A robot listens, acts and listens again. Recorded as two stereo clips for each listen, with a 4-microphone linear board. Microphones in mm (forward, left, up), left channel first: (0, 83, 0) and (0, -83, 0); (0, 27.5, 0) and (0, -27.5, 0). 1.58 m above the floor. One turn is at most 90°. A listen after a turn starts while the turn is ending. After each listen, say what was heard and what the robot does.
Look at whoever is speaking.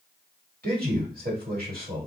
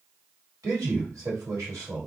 The man speaking: about 70° right or 110° right. Turn 70° right.
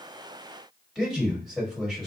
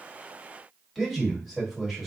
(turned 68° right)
Facing the man speaking.